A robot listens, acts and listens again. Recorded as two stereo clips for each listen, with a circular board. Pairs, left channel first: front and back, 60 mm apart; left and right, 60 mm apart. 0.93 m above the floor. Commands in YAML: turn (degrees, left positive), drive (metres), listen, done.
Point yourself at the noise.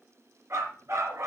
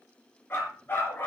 turn: 145
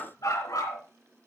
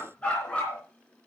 turn: 20
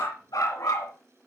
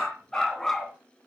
turn: 10
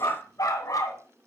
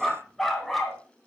done: "Found it: a dog barking, straight ahead, 2 to 4 m away."